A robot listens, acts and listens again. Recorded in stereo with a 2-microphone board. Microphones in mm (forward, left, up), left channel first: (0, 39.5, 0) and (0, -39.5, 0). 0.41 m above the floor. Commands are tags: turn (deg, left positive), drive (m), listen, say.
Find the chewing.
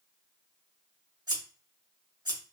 <listen/>
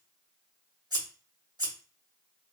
<listen/>
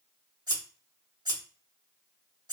<say>I can't make out chewing to turn to.</say>